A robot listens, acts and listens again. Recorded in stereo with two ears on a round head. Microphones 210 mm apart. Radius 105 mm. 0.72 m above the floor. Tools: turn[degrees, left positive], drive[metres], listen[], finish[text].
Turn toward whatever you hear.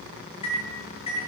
Thought: The microwave: about 25° left or 155° left.
Action: turn[25]
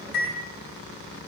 Thought: So it is at 130° left.
Action: turn[130]
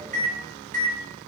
Thought: The microwave is now 35° right.
Action: turn[-35]
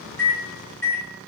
Thought: The microwave is now 10° left.
Action: turn[10]
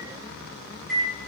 Action: finish[Facing the microwave.]